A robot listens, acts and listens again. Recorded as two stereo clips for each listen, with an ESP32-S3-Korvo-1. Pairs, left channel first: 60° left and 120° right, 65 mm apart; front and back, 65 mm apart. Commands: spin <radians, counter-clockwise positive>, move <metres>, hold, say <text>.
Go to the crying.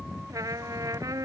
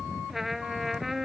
hold
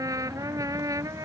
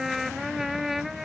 hold
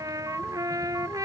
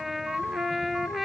say I can't make out crying, only a trumpet.